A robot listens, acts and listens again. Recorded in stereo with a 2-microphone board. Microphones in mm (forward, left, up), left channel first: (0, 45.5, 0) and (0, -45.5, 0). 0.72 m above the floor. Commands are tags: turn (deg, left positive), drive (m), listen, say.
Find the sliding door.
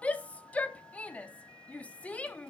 <listen/>
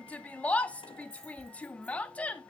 <listen/>
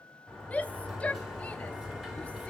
<turn deg="-30"/>
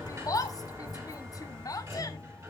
<turn deg="-145"/>
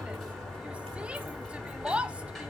<say>Facing the sliding door.</say>